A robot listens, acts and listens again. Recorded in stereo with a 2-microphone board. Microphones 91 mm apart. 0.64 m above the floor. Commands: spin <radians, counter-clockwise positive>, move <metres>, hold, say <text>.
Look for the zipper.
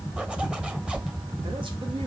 spin -0.52
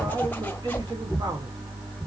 spin 0.35
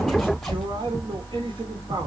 hold
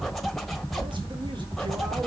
say Found it: a zipper, straight ahead.